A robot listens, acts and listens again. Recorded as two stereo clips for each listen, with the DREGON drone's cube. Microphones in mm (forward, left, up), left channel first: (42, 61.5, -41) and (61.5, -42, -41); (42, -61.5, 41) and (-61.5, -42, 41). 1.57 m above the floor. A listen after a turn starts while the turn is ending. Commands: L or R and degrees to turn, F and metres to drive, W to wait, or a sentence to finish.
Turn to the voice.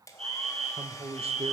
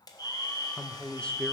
R90
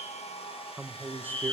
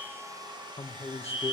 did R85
Facing the man speaking.